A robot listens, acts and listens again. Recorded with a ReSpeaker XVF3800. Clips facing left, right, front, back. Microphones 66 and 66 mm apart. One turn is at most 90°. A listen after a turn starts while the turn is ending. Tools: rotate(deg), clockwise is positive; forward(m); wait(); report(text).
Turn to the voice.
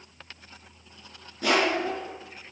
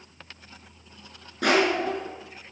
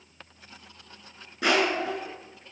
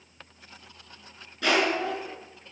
rotate(90)
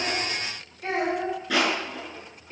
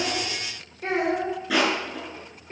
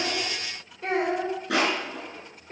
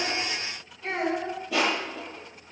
rotate(40)
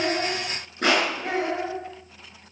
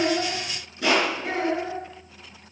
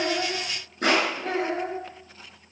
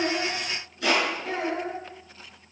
rotate(-10)
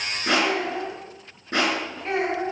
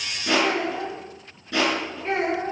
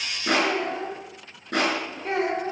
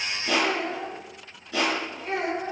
report("Facing the child speaking, over 4 m away.")